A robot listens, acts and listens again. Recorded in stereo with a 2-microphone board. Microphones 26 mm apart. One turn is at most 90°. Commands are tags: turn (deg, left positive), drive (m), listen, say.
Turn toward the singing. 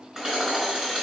<listen/>
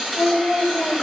<turn deg="-90"/>
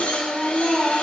<turn deg="-15"/>
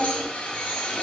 <listen/>
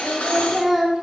<say>Found it: singing, straight ahead, 2 to 4 m away.</say>